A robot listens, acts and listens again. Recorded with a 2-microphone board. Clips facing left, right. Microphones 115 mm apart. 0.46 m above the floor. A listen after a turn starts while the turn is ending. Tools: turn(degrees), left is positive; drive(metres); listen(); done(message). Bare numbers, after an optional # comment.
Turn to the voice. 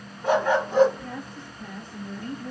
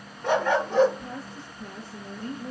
# The woman speaking: about 30° right or 150° right.
turn(-30)
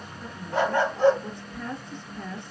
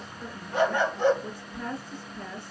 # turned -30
done("Facing the woman speaking, 2 to 4 m away.")